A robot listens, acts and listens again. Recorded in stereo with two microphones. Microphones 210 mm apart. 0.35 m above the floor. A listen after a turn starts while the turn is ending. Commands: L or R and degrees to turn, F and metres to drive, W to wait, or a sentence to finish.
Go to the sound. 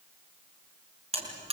R30
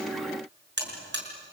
R120
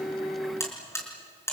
L15
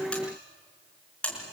F1.0
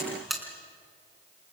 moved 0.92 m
F1.0
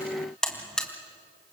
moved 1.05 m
F1.0
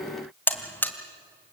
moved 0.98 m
L10
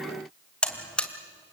F1.0
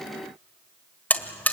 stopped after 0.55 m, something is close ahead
L10
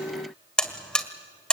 Arrived at the buzzer, straight ahead.